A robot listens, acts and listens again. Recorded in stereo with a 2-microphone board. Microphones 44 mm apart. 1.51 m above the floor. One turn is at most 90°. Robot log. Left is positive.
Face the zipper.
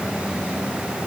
cmd idle
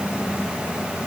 cmd idle
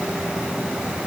end: I can't make out a zipper to turn to.